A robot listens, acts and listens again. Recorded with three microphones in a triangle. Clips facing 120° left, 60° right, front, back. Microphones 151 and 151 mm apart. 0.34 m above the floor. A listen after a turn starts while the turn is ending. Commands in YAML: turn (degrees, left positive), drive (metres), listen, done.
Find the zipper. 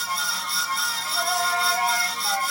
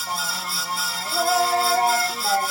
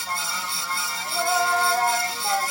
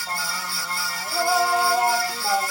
listen: true
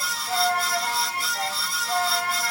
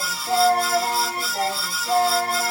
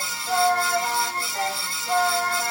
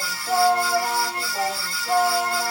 listen: true
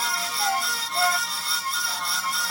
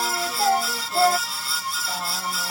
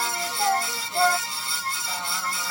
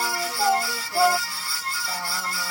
done: "I can't make out a zipper, only singing."